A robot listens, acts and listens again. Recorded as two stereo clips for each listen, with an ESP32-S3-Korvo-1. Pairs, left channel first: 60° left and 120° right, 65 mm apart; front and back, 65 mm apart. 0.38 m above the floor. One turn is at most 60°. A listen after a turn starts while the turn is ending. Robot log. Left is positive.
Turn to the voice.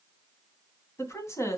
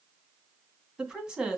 note: The woman speaking: 100° left.
cmd yaw +60
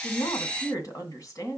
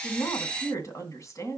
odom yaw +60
note: The woman speaking is now 35° left.
cmd yaw +35
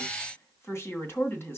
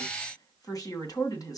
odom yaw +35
note: The woman speaking is now 10° left.
cmd yaw +10
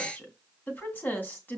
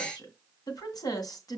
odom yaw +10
end: Facing the woman speaking, 2 to 4 m away.